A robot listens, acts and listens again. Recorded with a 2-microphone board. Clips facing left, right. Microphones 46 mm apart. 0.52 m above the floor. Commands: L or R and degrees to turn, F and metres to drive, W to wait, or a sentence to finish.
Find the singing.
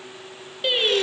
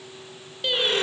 L15
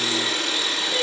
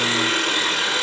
W
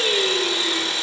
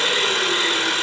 W
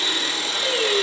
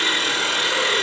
I heard singing, but can't make it out now. It was about straight ahead or 150° left.